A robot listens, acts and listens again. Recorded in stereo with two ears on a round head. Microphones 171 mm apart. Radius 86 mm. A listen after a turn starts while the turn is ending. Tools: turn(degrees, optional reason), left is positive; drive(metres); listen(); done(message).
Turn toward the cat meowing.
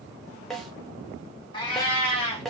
turn(degrees=30, reason="The cat meowing: about 30° left or 150° left.")
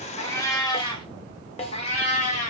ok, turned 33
turn(degrees=40, reason="The cat meowing: about 40° left or 140° left.")
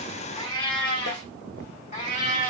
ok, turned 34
turn(degrees=40, reason="The cat meowing: about 40° left or 140° left.")
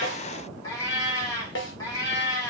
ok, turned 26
turn(degrees=20, reason="The cat meowing: about 20° left or 160° left.")
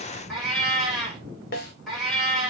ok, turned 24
done("Found it: a cat meowing, straight ahead, 1 to 2 m away.")